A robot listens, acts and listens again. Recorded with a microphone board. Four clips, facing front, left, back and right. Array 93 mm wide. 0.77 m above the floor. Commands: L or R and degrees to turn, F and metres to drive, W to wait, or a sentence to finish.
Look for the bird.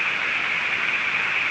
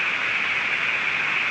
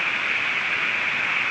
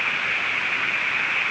W
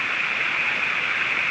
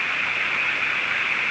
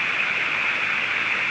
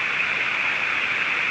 W
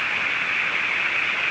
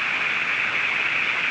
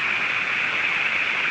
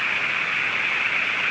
I can't make out a bird to turn to.